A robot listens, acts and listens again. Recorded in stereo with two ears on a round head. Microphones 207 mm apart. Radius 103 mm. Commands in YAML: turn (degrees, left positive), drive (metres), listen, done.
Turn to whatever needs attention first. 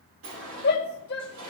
turn: 45
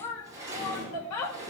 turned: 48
turn: 85
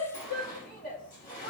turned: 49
turn: 35
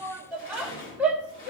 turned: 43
done: "Found it: a shout, straight ahead."